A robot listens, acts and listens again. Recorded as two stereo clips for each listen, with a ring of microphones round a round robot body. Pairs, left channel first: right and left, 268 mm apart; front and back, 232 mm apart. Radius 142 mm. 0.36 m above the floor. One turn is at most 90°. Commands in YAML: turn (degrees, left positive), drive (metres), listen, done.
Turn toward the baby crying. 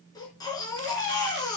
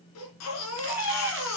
turn: -15
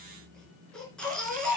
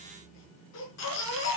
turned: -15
done: "Facing the baby crying."